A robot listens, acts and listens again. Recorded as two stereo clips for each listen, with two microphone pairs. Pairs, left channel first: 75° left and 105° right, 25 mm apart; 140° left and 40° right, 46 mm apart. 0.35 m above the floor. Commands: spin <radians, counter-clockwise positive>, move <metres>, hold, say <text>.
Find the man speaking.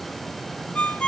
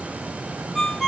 hold
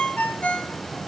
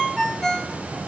hold
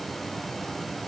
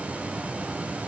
say I can't make out a man speaking to turn to.